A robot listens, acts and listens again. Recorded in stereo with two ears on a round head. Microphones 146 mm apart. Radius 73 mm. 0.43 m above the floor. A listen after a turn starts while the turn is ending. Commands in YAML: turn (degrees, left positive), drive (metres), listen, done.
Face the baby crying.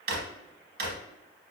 listen: true
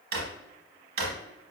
listen: true
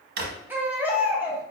turn: -30
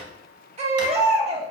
turn: -135
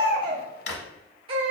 turn: -35
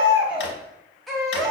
done: "Facing the baby crying."